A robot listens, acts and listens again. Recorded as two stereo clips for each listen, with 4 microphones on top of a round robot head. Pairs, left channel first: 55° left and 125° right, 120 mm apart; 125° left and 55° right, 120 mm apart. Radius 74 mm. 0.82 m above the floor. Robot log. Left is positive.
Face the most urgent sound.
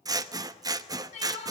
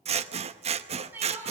note: The crying: 20° left.
cmd yaw +20
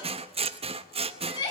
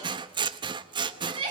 end: Facing the crying, over 4 m away.